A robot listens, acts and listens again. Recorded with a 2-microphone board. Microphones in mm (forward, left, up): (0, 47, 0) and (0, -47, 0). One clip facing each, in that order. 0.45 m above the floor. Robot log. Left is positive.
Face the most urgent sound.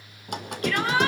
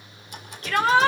note: The shout: about 30° right or 150° right.
cmd yaw -30
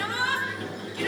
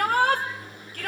note: So it is at 115° right.
cmd yaw -115
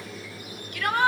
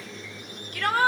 note: The shout is now 40° right.
cmd yaw -40
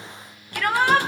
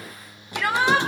note: The shout is now 10° right.
cmd yaw -10
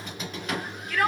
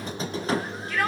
end: Facing the shout, 2 to 4 m away.